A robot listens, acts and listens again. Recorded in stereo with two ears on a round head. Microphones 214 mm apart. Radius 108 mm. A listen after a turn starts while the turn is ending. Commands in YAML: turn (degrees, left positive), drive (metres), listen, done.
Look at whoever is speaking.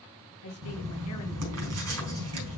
turn: 65
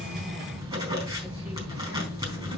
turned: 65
listen: true
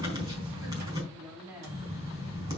done: "Facing the woman speaking."